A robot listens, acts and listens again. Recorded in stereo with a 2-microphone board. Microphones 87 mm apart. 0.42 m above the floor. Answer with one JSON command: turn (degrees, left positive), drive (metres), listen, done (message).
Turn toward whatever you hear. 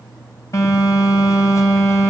{"turn": 35}
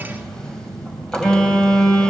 {"turn": 10}
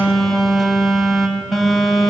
{"done": "Facing the phone buzzing."}